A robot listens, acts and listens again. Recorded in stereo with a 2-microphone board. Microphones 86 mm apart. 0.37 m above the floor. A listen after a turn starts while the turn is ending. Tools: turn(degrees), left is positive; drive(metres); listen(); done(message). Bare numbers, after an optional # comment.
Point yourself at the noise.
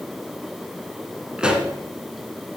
turn(-30)
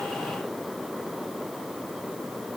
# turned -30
listen()
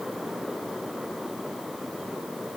done("I heard a pop, but can't make it out now. It was about 20° left or 140° right.")